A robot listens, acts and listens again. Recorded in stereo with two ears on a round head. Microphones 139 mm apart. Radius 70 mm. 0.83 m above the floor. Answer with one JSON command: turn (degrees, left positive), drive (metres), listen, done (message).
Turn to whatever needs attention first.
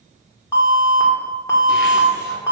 {"turn": 20}
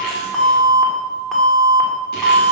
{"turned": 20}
{"done": "Facing the alarm."}